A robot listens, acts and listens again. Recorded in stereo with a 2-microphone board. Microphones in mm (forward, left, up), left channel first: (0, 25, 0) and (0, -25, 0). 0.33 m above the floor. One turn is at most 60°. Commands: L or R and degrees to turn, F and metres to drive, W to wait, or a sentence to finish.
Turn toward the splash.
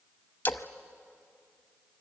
L45
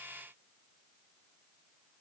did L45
W
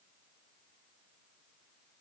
I heard a splash, but can't make it out now. It was about straight ahead or 90° left.